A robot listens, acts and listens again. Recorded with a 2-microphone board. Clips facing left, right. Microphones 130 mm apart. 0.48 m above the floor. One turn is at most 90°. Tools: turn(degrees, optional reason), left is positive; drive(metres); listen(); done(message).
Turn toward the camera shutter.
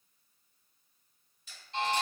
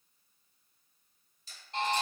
turn(degrees=-35, reason="The camera shutter: about 35° right or 145° right.")
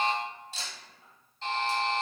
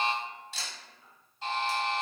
turn(degrees=-90, reason="So it is at 105° right.")
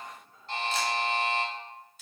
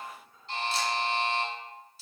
turn(degrees=-15, reason="Nothing new. It was at 15° right.")
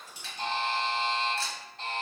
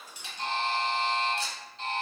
listen()
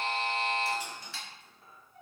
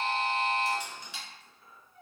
turn(degrees=-20, reason="The camera shutter is now 20° right.")
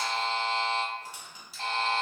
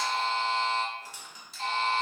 done("Found it: a camera shutter, straight ahead.")